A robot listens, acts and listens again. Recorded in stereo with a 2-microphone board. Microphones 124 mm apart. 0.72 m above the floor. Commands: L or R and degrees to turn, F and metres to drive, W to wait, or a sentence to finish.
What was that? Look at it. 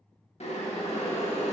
L60
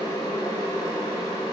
L35
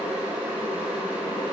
R15
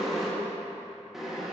Found it: boiling, straight ahead.